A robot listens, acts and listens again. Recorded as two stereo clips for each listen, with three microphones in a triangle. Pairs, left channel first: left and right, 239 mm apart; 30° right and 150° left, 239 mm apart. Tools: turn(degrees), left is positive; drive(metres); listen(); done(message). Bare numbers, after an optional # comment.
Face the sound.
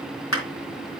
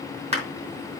# The clap: 90° left.
turn(90)
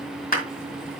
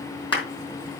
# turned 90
# The clap is now 40° left.
turn(40)
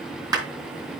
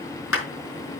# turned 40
# The clap is now 15° right.
turn(-15)
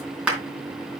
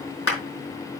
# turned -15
done("Facing the clap, 2 to 4 m away.")